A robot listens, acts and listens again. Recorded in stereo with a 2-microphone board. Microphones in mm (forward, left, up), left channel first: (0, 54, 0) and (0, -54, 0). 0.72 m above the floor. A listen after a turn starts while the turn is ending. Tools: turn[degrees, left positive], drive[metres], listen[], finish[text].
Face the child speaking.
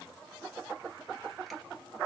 Action: listen[]
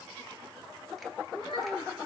Thought: The child speaking: about 75° left or 105° left.
Action: turn[75]
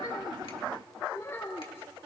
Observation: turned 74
Thought: So it is at 25° left.
Action: turn[25]
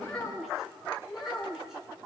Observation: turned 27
Action: finish[Found it: a child speaking, straight ahead, over 4 m away.]